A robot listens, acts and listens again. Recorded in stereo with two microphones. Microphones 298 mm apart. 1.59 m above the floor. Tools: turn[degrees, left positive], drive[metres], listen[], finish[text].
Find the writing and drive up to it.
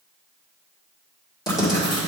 Action: turn[30]
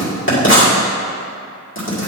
Thought: So it is at 140° left.
Action: turn[140]
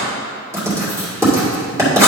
Thought: The writing is now 10° right.
Action: turn[-10]
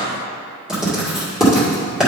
Action: drive[1.0]
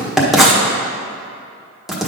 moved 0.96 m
Action: drive[1.0]
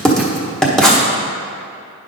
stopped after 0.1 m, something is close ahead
Action: finish[Arrived at the writing, straight ahead.]